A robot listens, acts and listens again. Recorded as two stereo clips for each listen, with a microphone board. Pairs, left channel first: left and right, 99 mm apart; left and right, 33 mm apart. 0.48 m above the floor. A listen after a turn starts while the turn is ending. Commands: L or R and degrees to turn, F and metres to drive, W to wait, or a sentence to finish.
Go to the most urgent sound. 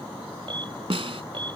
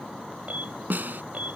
R55
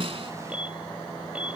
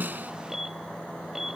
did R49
R15
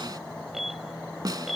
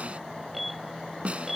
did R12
F1.0
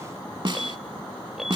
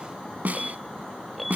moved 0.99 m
F1.0
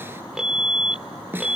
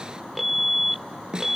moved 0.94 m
R10
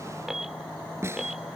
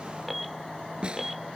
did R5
F1.0
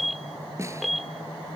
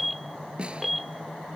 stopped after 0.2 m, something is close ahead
Arrived at the alarm, straight ahead.